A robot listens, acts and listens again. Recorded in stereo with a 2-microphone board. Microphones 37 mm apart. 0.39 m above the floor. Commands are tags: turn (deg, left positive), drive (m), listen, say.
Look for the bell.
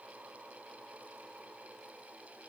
<listen/>
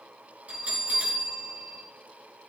<turn deg="-35"/>
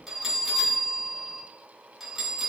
<say>Facing the bell.</say>